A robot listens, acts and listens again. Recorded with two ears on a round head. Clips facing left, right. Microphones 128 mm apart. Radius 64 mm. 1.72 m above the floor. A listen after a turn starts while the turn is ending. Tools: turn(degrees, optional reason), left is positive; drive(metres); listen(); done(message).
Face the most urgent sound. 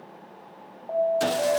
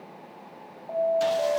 turn(degrees=15, reason="The alarm: about 15° left or 165° left.")
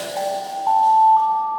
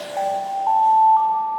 done("Facing the alarm.")